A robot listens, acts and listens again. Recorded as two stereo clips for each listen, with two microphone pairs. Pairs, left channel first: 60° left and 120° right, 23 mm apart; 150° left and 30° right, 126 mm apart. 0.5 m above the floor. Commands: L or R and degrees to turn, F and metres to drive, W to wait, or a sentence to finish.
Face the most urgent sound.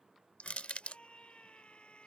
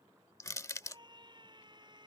L25
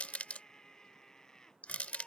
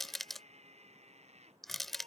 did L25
Found it: a scream, straight ahead.